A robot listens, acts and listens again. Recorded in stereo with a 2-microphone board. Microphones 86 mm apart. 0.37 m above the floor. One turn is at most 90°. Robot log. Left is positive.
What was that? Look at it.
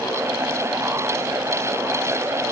cmd idle
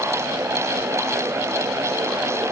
cmd idle
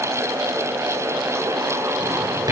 note: The drawer: about 50° right or 130° right.
cmd yaw -50
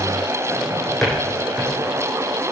end: Found it: a drawer, straight ahead.